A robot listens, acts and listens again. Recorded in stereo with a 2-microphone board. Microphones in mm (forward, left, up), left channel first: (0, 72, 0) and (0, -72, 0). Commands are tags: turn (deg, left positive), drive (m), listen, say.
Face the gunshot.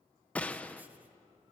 <turn deg="30"/>
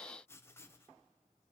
<listen/>
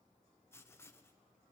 <say>I heard a gunshot, but can't make it out now. It was about 20° right or 140° left.</say>